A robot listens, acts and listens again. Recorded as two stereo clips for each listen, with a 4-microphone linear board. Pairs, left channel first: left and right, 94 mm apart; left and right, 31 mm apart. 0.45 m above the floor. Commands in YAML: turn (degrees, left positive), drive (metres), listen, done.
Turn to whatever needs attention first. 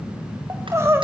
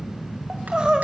turn: -30
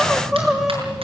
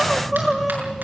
done: "Facing the crying."